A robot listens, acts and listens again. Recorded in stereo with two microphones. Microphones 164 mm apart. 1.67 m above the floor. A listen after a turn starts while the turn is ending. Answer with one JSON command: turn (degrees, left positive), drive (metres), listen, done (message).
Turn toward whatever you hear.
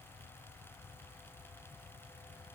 {"listen": true}
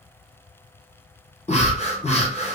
{"turn": 40}
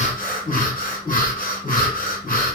{"turn": 90}
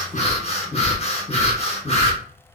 {"turn": 50}
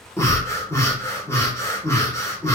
{"turn": 20}
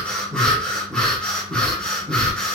{"done": "Facing the breathing, under 1 m away."}